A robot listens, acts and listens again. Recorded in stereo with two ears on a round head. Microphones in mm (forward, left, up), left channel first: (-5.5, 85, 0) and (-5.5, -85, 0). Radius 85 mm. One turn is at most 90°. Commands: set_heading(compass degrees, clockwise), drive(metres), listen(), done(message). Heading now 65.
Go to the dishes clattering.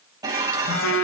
set_heading(85)
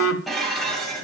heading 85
drive(1.0)
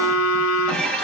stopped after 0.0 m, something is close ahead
done("Blocked. The dishes clattering is further on, straight ahead.")